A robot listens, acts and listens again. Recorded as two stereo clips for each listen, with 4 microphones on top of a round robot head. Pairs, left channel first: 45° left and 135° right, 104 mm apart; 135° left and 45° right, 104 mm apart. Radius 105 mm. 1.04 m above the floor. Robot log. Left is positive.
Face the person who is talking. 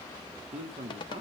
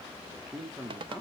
note: The man speaking: 130° right.
cmd yaw -130
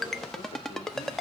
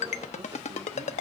cmd idle
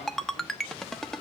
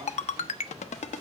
cmd idle
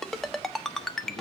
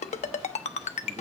end: Facing where the man speaking came from. I can't hear it now.